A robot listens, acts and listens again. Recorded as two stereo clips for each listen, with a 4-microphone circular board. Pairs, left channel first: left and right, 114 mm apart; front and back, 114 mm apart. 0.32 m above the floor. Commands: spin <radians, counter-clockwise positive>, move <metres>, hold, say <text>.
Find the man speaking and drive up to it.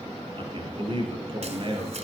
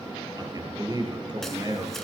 spin -2.18
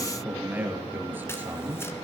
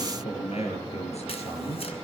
spin -0.26
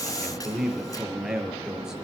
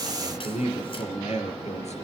move 1.0
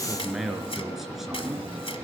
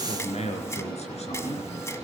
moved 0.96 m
move 1.0
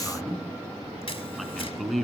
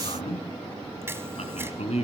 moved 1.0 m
move 1.0
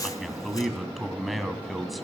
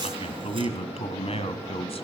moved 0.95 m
move 1.0
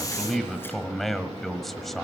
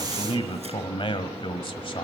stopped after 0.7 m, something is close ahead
say I am next to the man speaking.